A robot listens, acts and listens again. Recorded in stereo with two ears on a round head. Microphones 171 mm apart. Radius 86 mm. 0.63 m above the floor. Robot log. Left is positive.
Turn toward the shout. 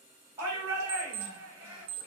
cmd yaw -30
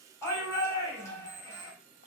note: So it is at 15° left.
cmd yaw +15
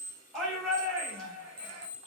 end: Found it: a shout, straight ahead.